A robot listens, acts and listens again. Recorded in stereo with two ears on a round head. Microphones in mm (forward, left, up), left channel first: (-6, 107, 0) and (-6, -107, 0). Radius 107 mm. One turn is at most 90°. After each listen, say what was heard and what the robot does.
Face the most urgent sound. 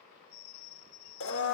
Keep listening.
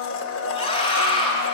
The scream: about 25° left or 155° left. Turn 25° left.
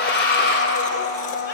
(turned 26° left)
So it is at 125° left. Turn 90° left.
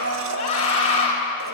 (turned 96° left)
The scream is now 30° left. Turn 30° left.
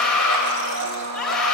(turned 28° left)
Facing the scream.